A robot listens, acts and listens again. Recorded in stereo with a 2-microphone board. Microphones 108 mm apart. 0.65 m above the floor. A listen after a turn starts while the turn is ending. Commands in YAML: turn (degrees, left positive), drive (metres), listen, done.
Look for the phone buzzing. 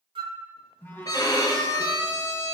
turn: 20
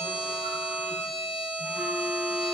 listen: true
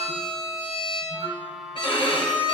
done: "Found it: a phone buzzing, straight ahead, 2 to 4 m away."